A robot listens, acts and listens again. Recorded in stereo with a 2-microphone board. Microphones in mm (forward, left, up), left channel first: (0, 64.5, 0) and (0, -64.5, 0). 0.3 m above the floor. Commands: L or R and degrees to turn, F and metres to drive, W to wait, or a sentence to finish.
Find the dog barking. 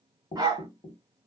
R30
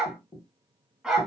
Facing the dog barking.